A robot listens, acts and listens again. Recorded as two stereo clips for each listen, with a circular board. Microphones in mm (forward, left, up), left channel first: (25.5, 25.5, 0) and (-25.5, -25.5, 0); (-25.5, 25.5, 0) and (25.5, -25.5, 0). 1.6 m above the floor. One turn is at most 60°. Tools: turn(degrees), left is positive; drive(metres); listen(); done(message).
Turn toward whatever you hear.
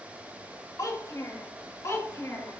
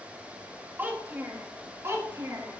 done("Facing the child speaking, 2 to 4 m away.")